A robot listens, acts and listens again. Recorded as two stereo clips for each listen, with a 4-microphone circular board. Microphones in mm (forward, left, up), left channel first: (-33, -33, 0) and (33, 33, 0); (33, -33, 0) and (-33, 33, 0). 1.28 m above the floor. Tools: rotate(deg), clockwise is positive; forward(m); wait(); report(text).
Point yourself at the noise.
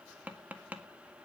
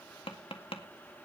rotate(30)
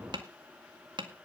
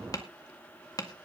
report("Facing the tapping.")